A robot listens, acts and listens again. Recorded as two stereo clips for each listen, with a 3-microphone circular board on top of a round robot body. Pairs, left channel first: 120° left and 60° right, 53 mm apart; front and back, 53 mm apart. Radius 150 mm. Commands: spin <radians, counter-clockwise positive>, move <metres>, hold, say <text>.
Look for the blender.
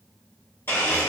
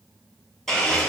spin 1.48
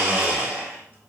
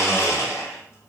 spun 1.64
spin -0.17
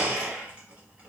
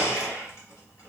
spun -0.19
say Facing the blender, 1 to 2 m away.